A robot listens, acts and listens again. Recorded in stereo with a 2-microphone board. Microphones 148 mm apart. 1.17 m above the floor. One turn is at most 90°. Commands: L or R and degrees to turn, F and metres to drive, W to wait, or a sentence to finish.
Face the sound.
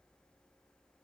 W
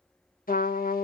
L75
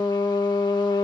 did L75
L30
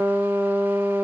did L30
R10
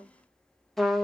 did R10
Found it: a trumpet, straight ahead, 1 to 2 m away.